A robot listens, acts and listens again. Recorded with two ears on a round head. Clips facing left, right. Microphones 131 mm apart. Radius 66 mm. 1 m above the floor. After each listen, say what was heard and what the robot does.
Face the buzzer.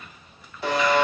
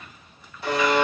The buzzer: about 65° left or 115° left. Turn 65° left.
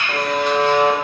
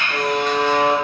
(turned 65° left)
So it is at 50° left. Turn 50° left.
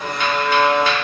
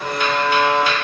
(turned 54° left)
Found it: a buzzer, straight ahead, under 1 m away.